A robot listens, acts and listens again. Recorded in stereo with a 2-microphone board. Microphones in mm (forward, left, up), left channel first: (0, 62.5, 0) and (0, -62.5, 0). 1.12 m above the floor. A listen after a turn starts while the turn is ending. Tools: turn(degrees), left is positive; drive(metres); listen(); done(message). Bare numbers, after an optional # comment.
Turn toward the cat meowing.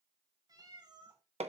# The cat meowing: about 40° right or 140° right.
turn(-40)
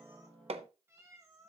# So it is at 30° right.
turn(-30)
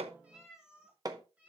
# The cat meowing is now 10° right.
turn(-10)
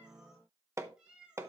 # The cat meowing is now 10° right.
turn(-10)
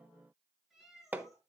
done("Facing the cat meowing, over 4 m away.")